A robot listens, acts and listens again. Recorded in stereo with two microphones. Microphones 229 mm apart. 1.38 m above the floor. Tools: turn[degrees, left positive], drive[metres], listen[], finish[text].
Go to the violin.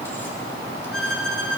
Action: turn[90]
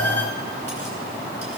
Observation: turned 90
Action: listen[]
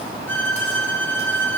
Thought: The violin is now 10° left.
Action: turn[10]
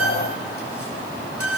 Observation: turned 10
Action: drive[1.0]
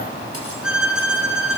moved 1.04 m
Action: drive[1.0]
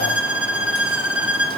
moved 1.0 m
Action: drive[1.0]
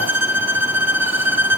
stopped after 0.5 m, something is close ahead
Thought: The violin is now 10° right.
Action: turn[-10]
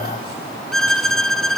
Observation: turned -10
Action: finish[I am next to the violin.]